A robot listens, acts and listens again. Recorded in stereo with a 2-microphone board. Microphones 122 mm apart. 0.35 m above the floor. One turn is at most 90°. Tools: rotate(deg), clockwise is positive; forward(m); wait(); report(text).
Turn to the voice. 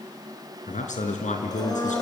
rotate(-90)
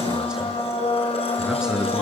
report("Found it: a man speaking, straight ahead.")